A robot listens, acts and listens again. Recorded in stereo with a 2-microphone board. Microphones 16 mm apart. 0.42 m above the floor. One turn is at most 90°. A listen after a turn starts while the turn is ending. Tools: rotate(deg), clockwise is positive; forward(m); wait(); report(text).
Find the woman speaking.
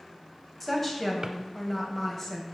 rotate(-25)
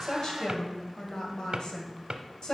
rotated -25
rotate(-90)
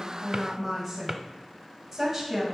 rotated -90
rotate(15)
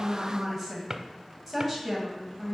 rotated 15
report("Found it: a woman speaking, straight ahead, 2 to 4 m away.")